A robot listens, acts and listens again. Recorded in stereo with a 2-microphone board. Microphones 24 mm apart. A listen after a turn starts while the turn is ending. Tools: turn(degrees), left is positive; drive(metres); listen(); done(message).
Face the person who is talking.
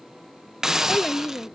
turn(degrees=40)
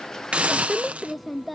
done("Facing the child speaking.")